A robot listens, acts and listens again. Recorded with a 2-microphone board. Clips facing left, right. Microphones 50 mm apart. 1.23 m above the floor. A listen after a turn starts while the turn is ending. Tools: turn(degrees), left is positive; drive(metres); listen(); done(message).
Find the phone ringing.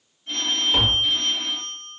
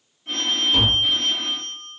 turn(degrees=-70)
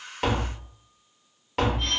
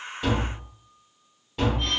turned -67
listen()
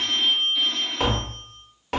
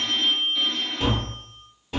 turn(degrees=-10)
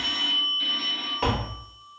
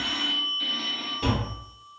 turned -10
done("Found it: a phone ringing, straight ahead, 1 to 2 m away.")